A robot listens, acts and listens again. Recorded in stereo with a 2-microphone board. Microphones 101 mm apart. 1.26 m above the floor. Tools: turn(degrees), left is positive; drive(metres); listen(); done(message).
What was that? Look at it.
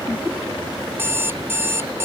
turn(degrees=-25)
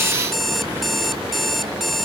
done("Facing the alarm clock.")